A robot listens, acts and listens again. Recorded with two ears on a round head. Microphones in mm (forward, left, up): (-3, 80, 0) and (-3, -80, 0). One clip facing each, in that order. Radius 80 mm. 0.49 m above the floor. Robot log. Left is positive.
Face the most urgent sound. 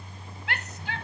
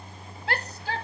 note: The shout: about 35° right or 145° right.
cmd yaw -35
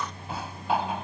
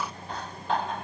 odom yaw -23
cmd idle
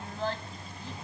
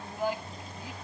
note: So it is at 10° right.
cmd yaw -10
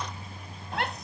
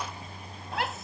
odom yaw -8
end: Found it: a shout, straight ahead.